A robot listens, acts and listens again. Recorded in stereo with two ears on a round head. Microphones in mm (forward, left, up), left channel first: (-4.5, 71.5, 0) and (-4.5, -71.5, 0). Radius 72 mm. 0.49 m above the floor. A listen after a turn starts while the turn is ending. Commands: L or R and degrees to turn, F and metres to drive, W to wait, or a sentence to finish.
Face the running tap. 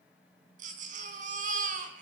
W
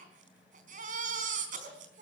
W
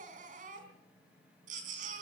I can't make out a running tap to turn to.